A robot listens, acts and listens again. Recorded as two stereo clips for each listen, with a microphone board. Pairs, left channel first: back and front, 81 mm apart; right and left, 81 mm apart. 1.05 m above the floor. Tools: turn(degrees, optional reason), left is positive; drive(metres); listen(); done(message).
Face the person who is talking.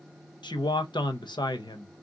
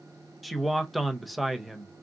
turn(degrees=180, reason="The man speaking: straight behind.")
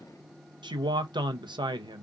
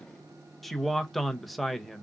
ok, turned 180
done("Facing the man speaking, under 1 m away.")